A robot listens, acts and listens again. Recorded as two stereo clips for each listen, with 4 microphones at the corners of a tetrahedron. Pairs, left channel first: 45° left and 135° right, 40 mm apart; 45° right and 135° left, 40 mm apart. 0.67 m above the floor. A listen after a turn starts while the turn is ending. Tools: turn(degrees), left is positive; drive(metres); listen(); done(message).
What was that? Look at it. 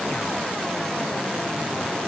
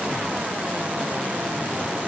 listen()
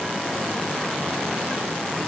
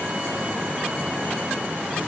listen()
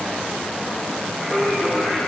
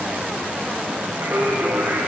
turn(degrees=120)
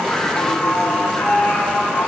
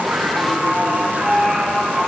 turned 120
turn(degrees=40)
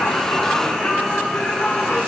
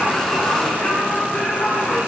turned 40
turn(degrees=-10)
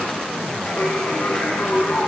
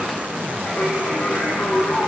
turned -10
done("Facing the singing, over 4 m away.")